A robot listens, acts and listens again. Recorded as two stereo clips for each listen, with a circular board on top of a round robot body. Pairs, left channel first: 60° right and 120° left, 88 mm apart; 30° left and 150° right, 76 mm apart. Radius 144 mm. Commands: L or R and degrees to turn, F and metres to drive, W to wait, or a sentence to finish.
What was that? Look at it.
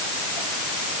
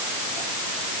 W
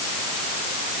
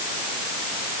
W
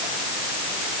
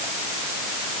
I can't make out anything to turn to.